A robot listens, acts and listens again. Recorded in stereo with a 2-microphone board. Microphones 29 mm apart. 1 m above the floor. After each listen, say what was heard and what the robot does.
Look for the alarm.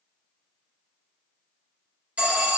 The alarm: about 55° right or 125° right. Turn 55° right.
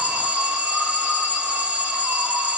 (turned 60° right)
So it is at 60° right. Turn 60° right.
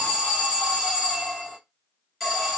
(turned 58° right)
Facing the alarm.